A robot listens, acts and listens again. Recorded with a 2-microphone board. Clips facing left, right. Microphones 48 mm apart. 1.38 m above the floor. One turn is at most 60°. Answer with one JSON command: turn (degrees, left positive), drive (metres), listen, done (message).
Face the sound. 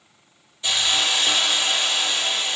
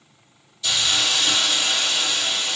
{"turn": 30}
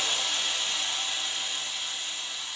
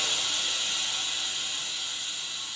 {"turn": 60}
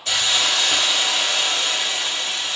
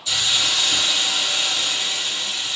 {"turn": 60}
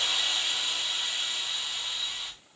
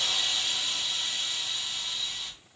{"turn": 10}
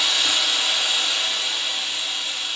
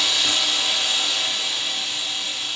{"done": "Facing the hiss."}